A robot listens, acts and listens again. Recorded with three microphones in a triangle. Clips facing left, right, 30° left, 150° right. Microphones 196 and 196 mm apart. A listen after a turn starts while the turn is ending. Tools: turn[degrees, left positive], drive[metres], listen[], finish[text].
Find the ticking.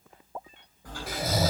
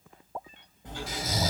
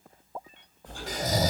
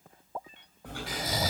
Thought: The ticking: 155° right.
Action: turn[-155]
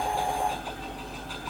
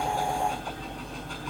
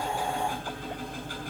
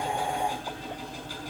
Action: finish[Found it: ticking, straight ahead, over 4 m away.]